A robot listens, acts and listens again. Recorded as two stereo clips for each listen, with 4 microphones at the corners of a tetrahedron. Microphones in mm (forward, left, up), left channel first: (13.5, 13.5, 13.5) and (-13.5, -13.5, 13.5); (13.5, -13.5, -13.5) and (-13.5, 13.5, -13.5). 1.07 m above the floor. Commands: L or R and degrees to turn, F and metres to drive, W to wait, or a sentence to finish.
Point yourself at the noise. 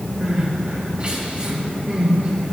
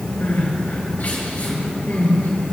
R85
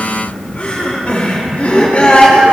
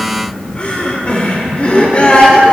Found it: crying, straight ahead, 2 to 4 m away.